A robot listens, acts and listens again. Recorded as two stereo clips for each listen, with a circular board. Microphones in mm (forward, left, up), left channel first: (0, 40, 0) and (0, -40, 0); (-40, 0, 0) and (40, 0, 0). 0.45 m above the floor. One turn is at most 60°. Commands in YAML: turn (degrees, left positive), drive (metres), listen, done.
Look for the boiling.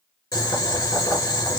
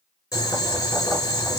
turn: 60
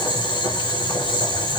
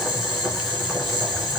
turn: 60
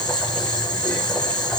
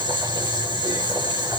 turn: 15
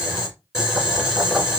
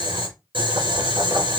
done: "Found it: boiling, straight ahead, 2 to 4 m away."